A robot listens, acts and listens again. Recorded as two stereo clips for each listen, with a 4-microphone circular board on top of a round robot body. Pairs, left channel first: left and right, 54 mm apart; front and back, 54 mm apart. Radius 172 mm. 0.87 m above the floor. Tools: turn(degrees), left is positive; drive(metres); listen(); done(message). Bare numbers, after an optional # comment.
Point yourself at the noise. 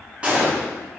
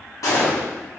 # The gunshot: 20° right.
turn(-20)
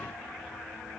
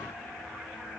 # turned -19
done("I heard a gunshot from this way, but can't make it out now.")